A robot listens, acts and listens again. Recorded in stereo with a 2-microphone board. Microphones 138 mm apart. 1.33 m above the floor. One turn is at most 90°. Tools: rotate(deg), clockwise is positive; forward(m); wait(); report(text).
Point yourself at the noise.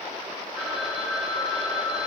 rotate(-30)
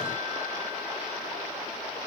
wait()
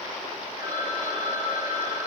rotate(30)
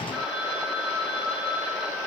report("Found it: a phone ringing, straight ahead.")